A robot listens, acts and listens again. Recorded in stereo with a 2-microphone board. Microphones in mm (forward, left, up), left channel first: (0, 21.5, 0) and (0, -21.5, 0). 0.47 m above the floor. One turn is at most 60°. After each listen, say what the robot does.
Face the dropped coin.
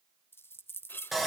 Turn 60° left.
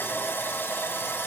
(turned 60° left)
Keep listening.
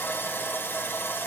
I heard a dropped coin, but can't make it out now. It was about straight ahead or 60° left.